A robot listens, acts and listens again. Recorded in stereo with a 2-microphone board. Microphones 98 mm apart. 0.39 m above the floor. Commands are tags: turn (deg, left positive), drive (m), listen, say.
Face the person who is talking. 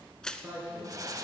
<turn deg="-20"/>
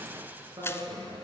<turn deg="-140"/>
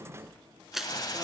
<listen/>
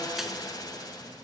<listen/>
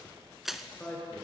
<turn deg="15"/>
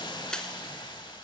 <listen/>
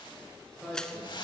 <say>Facing the man speaking.</say>